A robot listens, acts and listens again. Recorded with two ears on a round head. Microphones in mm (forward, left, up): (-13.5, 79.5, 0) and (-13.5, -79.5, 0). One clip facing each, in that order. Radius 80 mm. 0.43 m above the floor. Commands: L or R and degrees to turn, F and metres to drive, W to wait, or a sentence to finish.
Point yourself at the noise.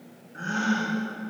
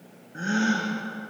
R25
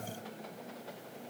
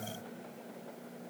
W
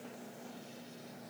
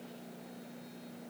I heard a gasp, but can't make it out now. It was about straight ahead or 130° right.